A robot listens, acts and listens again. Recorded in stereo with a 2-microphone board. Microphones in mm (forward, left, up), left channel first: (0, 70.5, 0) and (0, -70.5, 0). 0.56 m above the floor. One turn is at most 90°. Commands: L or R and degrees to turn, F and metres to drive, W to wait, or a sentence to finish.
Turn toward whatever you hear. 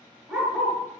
R30
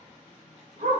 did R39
R90
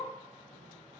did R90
R20
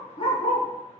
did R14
L45
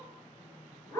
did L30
L25
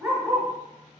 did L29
Facing the dog barking.